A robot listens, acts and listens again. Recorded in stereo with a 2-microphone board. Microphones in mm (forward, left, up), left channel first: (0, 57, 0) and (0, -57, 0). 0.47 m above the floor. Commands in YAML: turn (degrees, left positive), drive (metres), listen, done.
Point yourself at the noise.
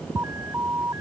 turn: -25
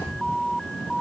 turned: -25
done: "Facing the alarm."